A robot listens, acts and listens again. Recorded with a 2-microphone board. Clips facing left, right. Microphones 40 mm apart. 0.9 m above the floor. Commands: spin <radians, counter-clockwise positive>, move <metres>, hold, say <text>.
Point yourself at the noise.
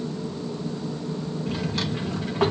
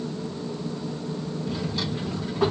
spin 1.13
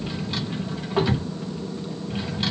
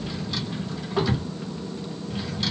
spin 0.61
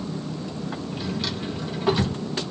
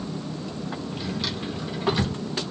say Found it: a drawer, straight ahead.